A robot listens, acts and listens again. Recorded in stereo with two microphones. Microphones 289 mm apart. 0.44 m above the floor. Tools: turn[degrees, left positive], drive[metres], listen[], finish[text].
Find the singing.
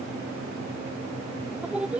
Action: turn[-30]
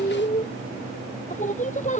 Thought: So it is at 25° left.
Action: turn[25]
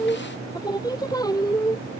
Thought: The singing is now 10° left.
Action: turn[10]
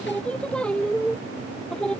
Action: finish[Facing the singing.]